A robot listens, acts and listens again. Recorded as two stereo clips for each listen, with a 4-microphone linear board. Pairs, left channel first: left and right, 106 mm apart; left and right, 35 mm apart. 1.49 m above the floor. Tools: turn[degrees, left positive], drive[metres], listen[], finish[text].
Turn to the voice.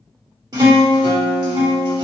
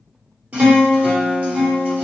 Action: listen[]
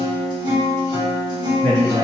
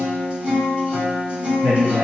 Action: turn[-90]
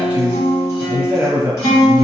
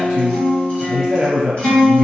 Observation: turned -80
Thought: So it is at 15° right.
Action: turn[-15]
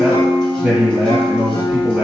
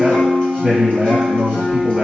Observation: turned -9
Action: finish[Facing the man speaking, 1 to 2 m away.]